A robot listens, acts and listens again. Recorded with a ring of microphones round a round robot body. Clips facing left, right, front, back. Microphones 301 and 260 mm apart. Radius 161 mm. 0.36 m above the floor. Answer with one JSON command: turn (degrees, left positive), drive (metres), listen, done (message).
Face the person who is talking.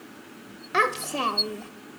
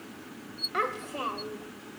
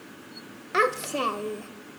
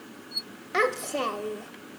{"turn": 80}
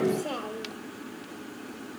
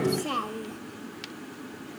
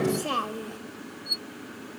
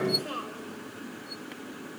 {"turn": -20}
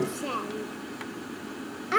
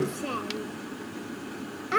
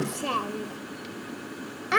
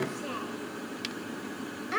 {"done": "Found it: a child speaking, straight ahead."}